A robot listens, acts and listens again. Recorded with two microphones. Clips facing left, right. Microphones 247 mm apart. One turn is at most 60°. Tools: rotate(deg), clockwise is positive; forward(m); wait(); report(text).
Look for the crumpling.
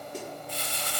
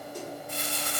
rotate(50)
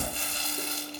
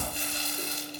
rotate(20)
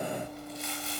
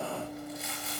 report("Found it: crumpling, straight ahead.")